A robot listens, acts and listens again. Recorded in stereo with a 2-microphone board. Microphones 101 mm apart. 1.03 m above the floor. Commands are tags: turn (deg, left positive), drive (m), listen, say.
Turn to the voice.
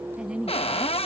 <turn deg="-30"/>
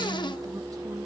<listen/>
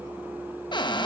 <listen/>
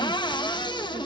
<say>I heard a woman speaking, but can't make it out now. It was about 20° left or 140° right.</say>